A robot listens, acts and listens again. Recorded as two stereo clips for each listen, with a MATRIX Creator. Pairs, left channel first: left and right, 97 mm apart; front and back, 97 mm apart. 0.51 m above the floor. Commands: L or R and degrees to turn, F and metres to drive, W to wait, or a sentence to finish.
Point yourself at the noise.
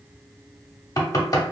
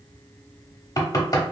L45
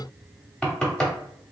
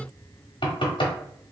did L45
L10
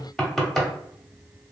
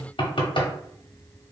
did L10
Facing the knocking.